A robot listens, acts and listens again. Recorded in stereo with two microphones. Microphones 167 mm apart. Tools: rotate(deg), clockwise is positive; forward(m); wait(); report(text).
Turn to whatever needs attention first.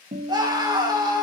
rotate(25)
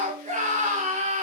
rotate(130)
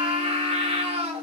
rotate(40)
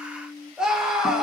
report("Found it: a scream, straight ahead.")